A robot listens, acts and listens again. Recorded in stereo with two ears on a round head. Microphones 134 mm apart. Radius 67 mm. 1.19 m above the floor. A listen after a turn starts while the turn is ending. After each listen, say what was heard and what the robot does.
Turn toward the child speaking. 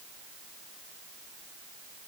Keep listening.
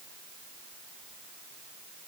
Keep listening.
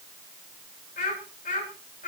The child speaking: about 55° left or 125° left. Turn 55° left.
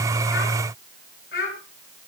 So it is at 70° left. Turn 70° left.
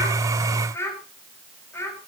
The child speaking is now 20° left. Turn 20° left.
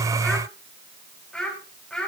Facing the child speaking, over 4 m away.